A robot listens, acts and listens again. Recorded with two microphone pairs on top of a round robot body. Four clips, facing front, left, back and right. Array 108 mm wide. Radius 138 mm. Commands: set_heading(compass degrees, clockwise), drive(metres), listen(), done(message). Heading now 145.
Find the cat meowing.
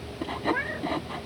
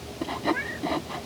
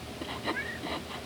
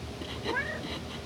set_heading(165)
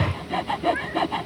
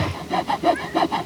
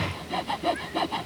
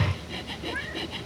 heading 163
listen()
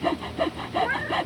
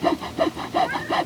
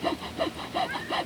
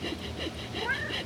done("Found it: a cat meowing, straight ahead.")